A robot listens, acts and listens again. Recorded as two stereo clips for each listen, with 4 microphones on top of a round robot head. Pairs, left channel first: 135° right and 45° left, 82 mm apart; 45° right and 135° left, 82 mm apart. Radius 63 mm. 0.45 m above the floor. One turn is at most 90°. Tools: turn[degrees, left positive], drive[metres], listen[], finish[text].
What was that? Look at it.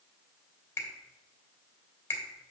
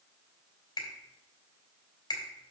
Thought: The finger snap: 75° right.
Action: turn[-75]
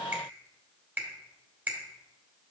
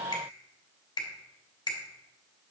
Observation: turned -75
Thought: The finger snap is now 20° right.
Action: turn[-20]
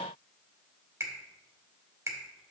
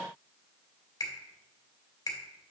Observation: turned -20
Action: finish[Found it: a finger snap, straight ahead.]